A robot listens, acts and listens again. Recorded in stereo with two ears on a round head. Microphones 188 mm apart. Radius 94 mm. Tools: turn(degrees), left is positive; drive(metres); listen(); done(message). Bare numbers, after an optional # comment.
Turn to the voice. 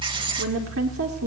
# The woman speaking: about 75° right or 105° right.
turn(-75)
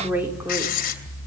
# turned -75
# So it is at 10° right.
turn(-10)
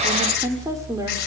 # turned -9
# The woman speaking is now 15° right.
turn(-15)
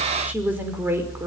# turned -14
# The woman speaking is now 10° right.
turn(-10)
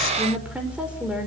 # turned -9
done("Found it: a woman speaking, straight ahead, over 4 m away.")